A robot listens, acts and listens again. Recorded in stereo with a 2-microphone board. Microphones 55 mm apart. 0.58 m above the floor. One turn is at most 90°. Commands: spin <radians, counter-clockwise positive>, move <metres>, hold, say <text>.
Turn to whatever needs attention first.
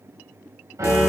hold
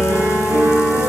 hold
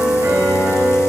say I can't make out anything urgent to turn to.